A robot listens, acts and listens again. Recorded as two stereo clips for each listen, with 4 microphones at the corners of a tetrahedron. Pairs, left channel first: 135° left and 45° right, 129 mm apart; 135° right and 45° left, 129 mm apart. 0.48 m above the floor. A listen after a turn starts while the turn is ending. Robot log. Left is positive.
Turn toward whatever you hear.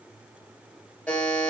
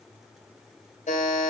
note: The buzzer: 140° right.
cmd yaw -140
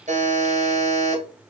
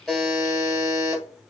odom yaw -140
note: The buzzer is now 15° right.
cmd yaw -15
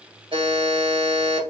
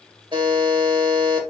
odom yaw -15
end: Facing the buzzer, 2 to 4 m away.